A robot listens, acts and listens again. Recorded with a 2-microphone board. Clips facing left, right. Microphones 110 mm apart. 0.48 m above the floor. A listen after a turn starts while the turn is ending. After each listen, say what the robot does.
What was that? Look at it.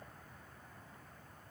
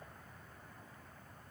Keep listening.
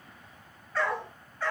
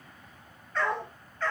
Turn 30° left.
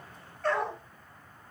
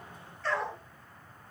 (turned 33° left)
Turn 130° left.
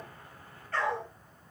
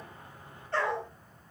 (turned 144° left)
Turn 30° right.
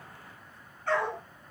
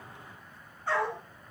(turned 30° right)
Turn 10° right.
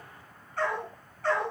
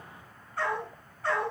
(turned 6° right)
Facing the dog barking.